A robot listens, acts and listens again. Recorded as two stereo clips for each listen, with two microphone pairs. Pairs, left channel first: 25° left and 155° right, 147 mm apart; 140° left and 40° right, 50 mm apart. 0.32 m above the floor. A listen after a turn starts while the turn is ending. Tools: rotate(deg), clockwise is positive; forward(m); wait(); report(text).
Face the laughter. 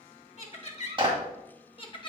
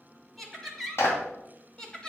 rotate(-65)
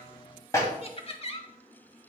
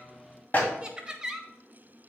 rotate(-30)
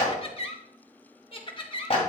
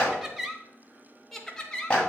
rotate(-65)
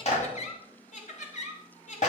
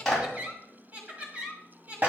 rotate(-15)
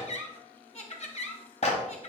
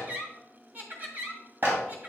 report("Facing the laughter, 1 to 2 m away.")